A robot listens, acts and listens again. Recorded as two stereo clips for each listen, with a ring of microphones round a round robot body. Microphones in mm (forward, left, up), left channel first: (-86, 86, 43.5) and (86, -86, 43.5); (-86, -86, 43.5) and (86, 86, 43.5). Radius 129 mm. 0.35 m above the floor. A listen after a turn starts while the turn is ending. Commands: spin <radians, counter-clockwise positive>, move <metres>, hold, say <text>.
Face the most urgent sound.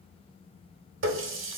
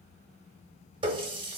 hold
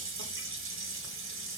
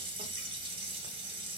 hold
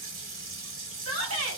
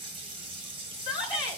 spin -1.13
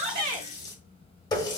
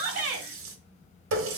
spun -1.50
spin 0.35
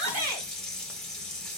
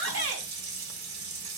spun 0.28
hold
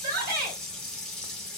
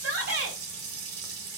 say Found it: a shout, straight ahead, 1 to 2 m away.